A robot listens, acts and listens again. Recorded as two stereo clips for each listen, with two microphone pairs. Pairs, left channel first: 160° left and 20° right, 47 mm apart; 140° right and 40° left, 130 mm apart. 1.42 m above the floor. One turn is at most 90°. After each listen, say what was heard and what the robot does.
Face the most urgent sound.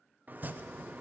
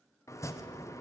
Keep listening.
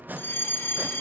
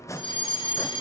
The fire alarm: 175° left. Turn 90° left.
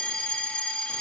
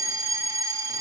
The fire alarm is now 100° left. Turn 90° left.
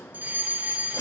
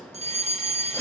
The fire alarm is now 25° left. Turn 25° left.
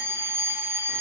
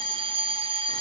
Found it: a fire alarm, straight ahead.